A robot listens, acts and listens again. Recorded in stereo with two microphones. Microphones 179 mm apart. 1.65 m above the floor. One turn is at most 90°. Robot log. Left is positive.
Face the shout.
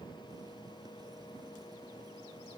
cmd idle
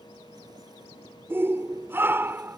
cmd yaw -30
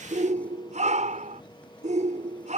note: So it is at 135° right.
cmd yaw -90
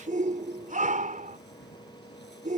note: The shout is now 45° right.
cmd yaw -45
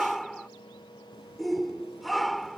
end: Facing the shout.